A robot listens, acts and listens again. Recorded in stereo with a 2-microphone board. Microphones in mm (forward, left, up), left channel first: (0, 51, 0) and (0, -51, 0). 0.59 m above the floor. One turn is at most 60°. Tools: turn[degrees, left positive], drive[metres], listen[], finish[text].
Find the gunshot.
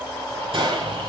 Thought: The gunshot: about 60° right or 120° right.
Action: turn[-60]
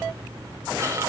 Action: listen[]
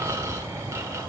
Action: finish[I heard a gunshot, but can't make it out now. It was about straight ahead or 60° right.]